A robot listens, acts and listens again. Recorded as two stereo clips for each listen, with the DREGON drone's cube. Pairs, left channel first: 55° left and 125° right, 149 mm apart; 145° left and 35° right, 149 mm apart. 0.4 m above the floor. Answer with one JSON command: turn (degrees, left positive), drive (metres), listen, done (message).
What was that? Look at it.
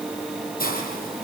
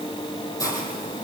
{"turn": 75}
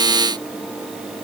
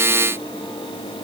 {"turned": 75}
{"listen": true}
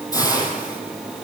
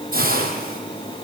{"turn": -10}
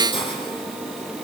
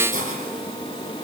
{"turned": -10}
{"done": "Found it: a hiss, straight ahead, over 4 m away."}